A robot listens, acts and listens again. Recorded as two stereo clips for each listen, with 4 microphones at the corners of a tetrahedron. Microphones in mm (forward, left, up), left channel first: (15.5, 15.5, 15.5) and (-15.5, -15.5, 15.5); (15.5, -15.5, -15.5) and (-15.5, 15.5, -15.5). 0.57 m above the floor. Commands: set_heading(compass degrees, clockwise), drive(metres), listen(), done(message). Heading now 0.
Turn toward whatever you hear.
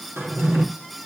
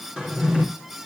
set_heading(150)
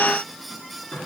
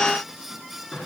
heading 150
done("Facing the drawer.")